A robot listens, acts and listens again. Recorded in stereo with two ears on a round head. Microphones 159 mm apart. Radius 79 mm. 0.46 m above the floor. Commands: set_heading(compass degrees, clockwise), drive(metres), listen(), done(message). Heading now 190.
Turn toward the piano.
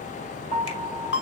set_heading(230)
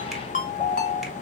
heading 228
done("Found it: a piano, straight ahead, 2 to 4 m away.")